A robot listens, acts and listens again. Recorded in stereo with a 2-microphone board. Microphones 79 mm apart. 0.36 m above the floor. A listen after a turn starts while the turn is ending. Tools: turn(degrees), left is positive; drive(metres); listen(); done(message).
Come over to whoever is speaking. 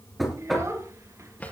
turn(degrees=-40)
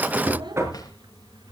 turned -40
turn(degrees=-105)
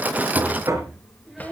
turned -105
drive(metres=1.0)
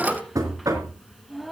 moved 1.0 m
drive(metres=1.0)
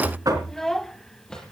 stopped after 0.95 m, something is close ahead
done("Arrived at the child speaking, straight ahead.")